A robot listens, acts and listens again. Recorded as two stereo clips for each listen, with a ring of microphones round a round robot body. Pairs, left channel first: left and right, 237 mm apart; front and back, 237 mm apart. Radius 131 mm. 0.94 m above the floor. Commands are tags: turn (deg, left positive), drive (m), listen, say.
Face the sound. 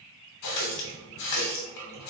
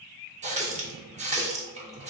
<turn deg="120"/>
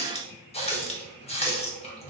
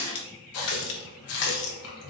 <turn deg="25"/>
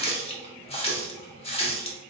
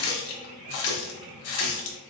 <turn deg="25"/>
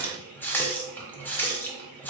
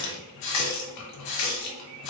<turn deg="10"/>
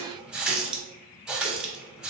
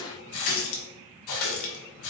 <say>Found it: a running tap, straight ahead, under 1 m away.</say>